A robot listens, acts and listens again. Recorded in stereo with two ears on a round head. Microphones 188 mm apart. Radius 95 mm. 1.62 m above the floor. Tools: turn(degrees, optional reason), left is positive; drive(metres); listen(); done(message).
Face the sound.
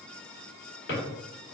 turn(degrees=55, reason="The drawer: about 55° left or 125° left.")
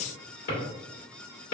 turn(degrees=55, reason="So it is at 55° left.")
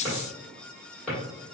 turn(degrees=10, reason="The drawer is now 10° left.")
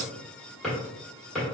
done("Found it: a drawer, straight ahead, 1 to 2 m away.")